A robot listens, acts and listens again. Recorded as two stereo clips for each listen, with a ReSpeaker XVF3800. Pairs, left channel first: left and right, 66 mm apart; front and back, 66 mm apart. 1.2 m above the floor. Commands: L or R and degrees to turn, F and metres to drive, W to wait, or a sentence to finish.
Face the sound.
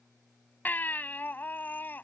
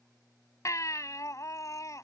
L30
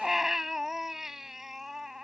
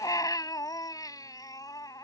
Found it: a baby crying, straight ahead.